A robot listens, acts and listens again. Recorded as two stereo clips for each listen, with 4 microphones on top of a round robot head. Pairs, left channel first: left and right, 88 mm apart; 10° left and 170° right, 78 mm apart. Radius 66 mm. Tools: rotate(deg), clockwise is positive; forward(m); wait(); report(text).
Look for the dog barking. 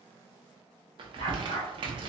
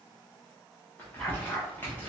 rotate(-90)
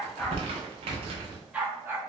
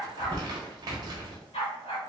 rotate(30)
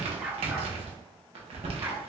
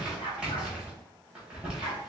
rotate(35)
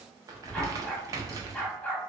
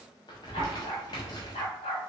rotate(-15)
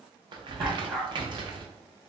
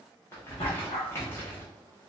report("Facing the dog barking, 1 to 2 m away.")